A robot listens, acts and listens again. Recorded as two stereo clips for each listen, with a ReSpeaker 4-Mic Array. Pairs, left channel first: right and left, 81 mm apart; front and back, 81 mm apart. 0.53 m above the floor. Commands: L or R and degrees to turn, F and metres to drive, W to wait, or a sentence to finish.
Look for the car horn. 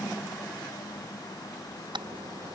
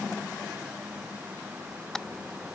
L85
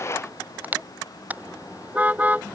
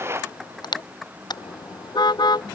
L20
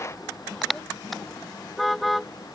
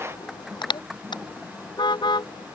Found it: a car horn, straight ahead.